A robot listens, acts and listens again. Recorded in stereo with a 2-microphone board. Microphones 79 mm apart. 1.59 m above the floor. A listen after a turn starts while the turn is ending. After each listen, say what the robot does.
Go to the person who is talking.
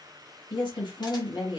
Turn 90° left.
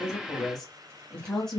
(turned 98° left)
Drive 1.0 m forward.
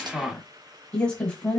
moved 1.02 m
Turn 15° left.
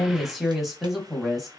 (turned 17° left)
Drive 1.0 m forward.
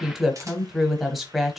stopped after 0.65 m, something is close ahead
I am next to the woman speaking.